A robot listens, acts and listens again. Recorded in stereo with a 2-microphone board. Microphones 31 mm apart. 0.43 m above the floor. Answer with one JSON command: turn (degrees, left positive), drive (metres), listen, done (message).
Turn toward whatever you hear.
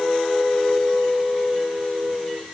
{"listen": true}
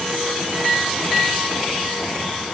{"listen": true}
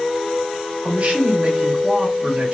{"turn": -50}
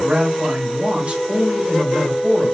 {"turn": -60}
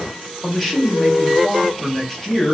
{"turn": 10}
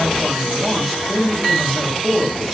{"done": "Found it: a man speaking, straight ahead."}